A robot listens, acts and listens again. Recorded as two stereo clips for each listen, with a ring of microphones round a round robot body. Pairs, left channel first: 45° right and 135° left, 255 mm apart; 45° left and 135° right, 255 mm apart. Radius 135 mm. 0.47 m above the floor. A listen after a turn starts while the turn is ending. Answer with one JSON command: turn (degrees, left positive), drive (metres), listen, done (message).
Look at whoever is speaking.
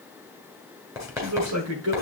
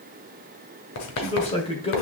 {"turn": 110}
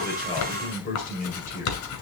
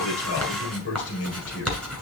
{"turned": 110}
{"turn": 10}
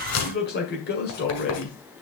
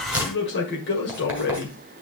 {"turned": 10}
{"done": "Facing the man speaking, 1 to 2 m away."}